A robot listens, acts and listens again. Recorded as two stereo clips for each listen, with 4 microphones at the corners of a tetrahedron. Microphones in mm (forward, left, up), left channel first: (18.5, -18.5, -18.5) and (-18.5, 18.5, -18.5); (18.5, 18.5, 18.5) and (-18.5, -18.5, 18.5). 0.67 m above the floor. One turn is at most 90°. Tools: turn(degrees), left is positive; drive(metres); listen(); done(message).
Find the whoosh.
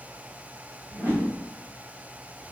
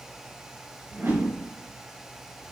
turn(degrees=90)
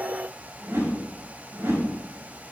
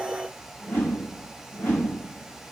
turn(degrees=90)
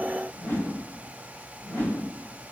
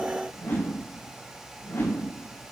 turn(degrees=20)
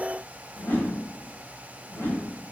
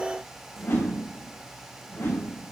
done("Facing the whoosh, 2 to 4 m away.")